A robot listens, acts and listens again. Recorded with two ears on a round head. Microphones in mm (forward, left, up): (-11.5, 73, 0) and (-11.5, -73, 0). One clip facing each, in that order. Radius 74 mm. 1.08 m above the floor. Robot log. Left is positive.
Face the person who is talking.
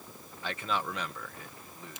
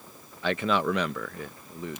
note: The man speaking: about 55° right or 125° right.
cmd yaw -55
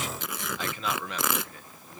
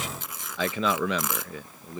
note: So it is at 60° right.
cmd yaw -60
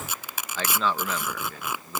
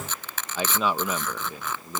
note: The man speaking is now 10° right.
cmd yaw -10
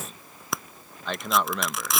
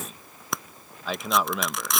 end: Facing the man speaking.